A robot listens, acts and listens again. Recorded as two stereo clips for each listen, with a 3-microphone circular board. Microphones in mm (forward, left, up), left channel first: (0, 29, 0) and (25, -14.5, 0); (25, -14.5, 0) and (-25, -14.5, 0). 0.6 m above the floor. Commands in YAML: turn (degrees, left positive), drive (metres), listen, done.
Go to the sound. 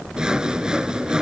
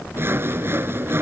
turn: -135
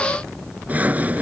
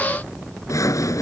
drive: 1.0
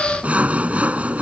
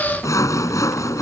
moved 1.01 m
drive: 1.0
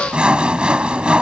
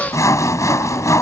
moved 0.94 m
turn: 10
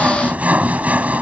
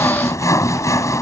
drive: 1.0
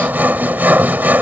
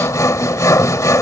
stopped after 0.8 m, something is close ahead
done: "I am next to the sawing."